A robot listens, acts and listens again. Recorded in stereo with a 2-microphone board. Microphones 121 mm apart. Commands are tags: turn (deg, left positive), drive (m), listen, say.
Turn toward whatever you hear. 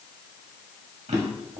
<turn deg="-70"/>
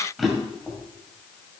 <say>Found it: a drawer, straight ahead, 2 to 4 m away.</say>